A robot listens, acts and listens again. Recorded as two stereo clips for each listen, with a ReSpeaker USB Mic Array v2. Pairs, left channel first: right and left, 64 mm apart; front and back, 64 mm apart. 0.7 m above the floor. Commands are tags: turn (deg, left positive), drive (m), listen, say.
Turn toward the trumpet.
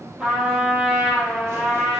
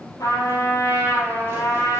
<turn deg="15"/>
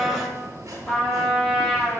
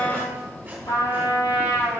<say>Facing the trumpet, 2 to 4 m away.</say>